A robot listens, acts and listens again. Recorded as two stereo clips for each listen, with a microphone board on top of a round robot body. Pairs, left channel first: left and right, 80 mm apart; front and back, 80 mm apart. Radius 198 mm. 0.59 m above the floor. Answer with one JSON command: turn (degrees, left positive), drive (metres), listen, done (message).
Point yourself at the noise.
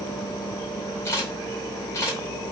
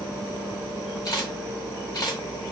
{"turn": 35}
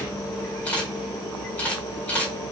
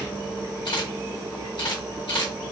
{"turn": 20}
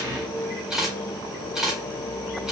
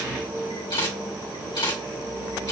{"done": "Facing the camera shutter, 2 to 4 m away."}